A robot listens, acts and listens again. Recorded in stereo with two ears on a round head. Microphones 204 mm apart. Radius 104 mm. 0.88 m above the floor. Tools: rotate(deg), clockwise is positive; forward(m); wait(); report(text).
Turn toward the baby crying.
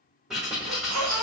rotate(90)
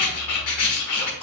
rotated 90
report("Found it: a baby crying, straight ahead.")